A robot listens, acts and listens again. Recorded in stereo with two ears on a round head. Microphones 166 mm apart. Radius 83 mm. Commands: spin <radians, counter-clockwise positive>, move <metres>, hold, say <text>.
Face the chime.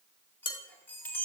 spin 0.52
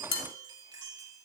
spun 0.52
spin -0.35
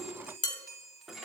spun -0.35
say Found it: a chime, straight ahead.